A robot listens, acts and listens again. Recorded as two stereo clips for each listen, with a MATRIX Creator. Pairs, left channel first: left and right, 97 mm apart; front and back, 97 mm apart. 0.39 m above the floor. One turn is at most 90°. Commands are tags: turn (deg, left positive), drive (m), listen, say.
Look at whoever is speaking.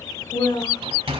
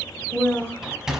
<turn deg="80"/>
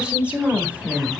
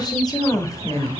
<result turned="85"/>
<turn deg="-30"/>
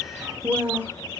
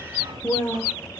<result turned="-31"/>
<turn deg="-35"/>
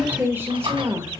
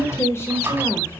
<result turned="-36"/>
<turn deg="-50"/>
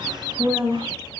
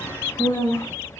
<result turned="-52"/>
<turn deg="-15"/>
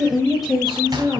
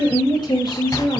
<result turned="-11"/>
<say>Found it: a woman speaking, straight ahead, 1 to 2 m away.</say>